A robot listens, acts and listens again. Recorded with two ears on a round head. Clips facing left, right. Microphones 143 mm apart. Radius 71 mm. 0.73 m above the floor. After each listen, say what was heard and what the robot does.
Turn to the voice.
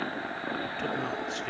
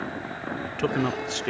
The man speaking: about 60° right or 120° right. Turn 60° right.
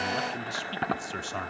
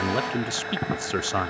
So it is at 70° right. Turn 70° right.
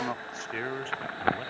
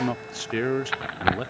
The man speaking is now 55° right. Turn 55° right.
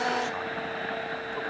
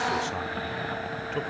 Keep listening.
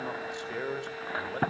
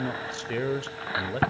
The man speaking is now 30° right. Turn 30° right.
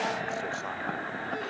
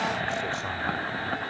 Keep listening.
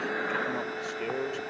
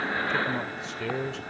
Facing the man speaking.